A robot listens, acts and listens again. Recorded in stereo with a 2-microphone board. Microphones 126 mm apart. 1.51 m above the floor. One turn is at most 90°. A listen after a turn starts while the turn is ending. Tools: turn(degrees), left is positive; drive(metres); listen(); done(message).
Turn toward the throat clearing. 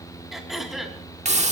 turn(degrees=30)
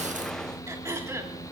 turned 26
turn(degrees=-30)
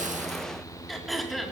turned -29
done("Found it: throat clearing, straight ahead, 2 to 4 m away.")